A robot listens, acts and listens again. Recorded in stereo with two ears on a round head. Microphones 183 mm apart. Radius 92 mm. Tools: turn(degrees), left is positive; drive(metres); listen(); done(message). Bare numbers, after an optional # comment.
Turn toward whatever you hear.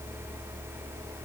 listen()
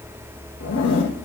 # The zipper: about 60° left or 120° left.
turn(60)
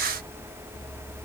listen()
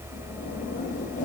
# So it is at 45° left.
turn(45)
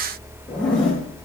done("Facing the zipper.")